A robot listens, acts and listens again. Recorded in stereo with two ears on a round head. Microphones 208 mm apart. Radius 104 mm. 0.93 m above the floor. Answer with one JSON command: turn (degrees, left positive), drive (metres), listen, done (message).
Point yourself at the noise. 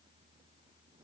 {"listen": true}
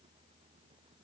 {"listen": true}
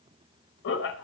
{"turn": 55}
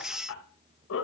{"turn": 60}
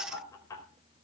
{"turn": 15}
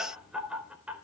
{"done": "Found it: laughter, straight ahead, 2 to 4 m away."}